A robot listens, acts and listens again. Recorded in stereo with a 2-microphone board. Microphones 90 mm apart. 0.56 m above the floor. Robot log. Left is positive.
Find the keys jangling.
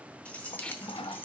note: The keys jangling: about 25° left or 155° left.
cmd yaw +25
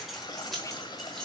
end: Facing the keys jangling.